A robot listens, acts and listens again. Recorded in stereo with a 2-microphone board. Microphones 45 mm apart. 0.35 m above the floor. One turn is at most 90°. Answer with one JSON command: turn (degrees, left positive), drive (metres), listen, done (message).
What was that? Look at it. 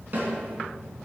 {"turn": -45}
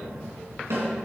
{"turn": -90}
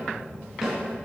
{"turn": -10}
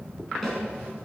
{"done": "Found it: a snare drum, straight ahead, 2 to 4 m away."}